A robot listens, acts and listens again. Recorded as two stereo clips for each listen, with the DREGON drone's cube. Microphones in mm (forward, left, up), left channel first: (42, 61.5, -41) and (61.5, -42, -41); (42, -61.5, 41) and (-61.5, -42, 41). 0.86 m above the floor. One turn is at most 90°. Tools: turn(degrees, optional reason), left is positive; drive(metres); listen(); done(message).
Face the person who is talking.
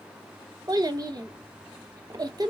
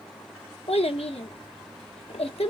turn(degrees=-25, reason="The child speaking: 25° right.")
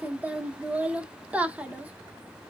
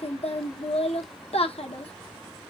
done("Facing the child speaking, under 1 m away.")